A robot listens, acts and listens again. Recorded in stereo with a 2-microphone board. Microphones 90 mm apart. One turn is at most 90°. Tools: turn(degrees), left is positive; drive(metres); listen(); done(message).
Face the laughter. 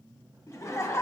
turn(degrees=30)
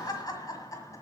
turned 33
turn(degrees=35)
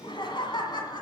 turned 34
turn(degrees=90)
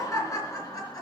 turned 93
turn(degrees=45)
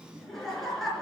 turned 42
done("Facing the laughter.")